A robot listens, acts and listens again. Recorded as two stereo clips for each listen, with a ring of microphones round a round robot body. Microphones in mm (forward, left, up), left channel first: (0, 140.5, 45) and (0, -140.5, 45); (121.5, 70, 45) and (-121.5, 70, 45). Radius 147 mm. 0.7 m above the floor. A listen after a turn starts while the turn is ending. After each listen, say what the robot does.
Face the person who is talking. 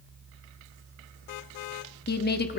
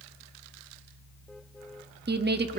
Turn 140° left.
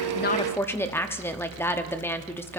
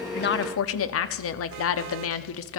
Turn 10° left.
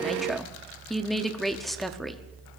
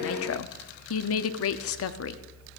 Facing the woman speaking, 1 to 2 m away.